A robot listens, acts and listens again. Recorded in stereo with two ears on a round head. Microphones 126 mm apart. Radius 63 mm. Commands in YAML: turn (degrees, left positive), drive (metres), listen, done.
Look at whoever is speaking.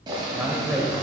turn: -30
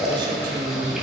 turn: -140
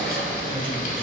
listen: true
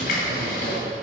listen: true
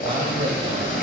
turn: -50
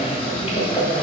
listen: true
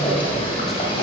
listen: true
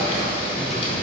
done: "Facing where the man speaking came from. I can't hear it now."